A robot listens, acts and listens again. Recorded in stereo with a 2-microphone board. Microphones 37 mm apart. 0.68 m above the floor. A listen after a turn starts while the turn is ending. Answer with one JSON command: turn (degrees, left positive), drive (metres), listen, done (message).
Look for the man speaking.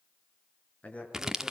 {"turn": 40}
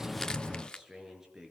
{"turn": -10}
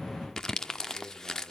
{"listen": true}
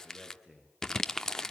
{"done": "Facing the man speaking."}